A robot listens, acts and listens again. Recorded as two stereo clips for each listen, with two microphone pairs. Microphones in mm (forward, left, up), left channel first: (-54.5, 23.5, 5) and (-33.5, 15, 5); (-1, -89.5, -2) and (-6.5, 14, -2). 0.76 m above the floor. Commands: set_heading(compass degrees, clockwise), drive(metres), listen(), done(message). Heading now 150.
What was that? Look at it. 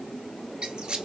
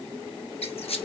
set_heading(225)
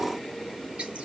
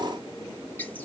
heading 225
listen()
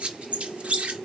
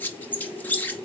set_heading(240)
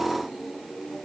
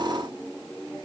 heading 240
listen()
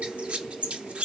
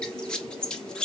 done("Found it: a squeak, straight ahead.")